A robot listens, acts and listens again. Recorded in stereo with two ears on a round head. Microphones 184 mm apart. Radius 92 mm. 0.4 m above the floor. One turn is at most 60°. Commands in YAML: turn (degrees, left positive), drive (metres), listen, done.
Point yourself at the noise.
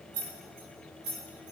turn: -60
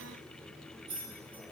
turn: -25
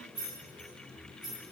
done: "Facing the keys jangling."